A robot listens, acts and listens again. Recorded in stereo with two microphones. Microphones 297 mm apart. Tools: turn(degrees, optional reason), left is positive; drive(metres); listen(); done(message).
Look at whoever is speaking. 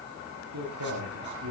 turn(degrees=-70, reason="The man speaking: about 70° right or 110° right.")
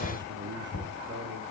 turn(degrees=-35, reason="So it is at 35° right.")
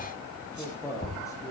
turn(degrees=10, reason="The man speaking is now 10° left.")
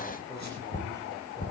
listen()
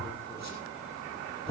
listen()
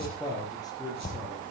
turn(degrees=10, reason="The man speaking is now 10° left.")
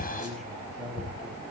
done("Facing the man speaking.")